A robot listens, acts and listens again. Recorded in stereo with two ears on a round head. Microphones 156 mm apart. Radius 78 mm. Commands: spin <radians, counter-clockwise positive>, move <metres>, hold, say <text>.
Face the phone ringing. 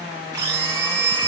spin 0.52
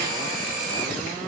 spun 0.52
hold
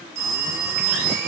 spin -0.35
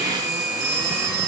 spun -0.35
say Facing the phone ringing, 1 to 2 m away.